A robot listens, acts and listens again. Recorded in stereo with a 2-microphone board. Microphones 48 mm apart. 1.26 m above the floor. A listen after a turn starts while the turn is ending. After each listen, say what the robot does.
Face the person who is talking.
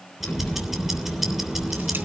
Turn 35° left.
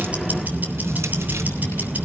Turn 95° left.
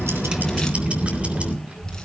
Turn 30° right.
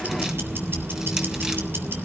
Keep listening.
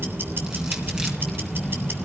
Facing the child speaking, 2 to 4 m away.